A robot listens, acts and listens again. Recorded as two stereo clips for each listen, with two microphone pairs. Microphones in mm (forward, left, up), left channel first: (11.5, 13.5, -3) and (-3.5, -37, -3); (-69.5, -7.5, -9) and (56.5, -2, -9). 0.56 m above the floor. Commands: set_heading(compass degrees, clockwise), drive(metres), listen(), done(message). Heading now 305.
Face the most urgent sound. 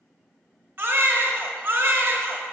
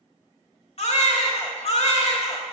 set_heading(95)
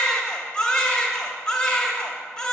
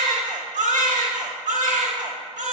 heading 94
done("Facing the baby crying.")